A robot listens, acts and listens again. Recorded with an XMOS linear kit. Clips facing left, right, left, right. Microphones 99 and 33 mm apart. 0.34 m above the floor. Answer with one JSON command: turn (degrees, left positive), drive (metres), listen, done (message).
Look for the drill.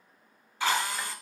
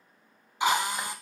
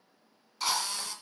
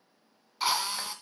{"turn": -20}
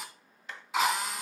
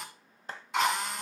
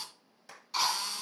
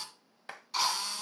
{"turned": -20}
{"done": "Found it: a drill, straight ahead, 2 to 4 m away."}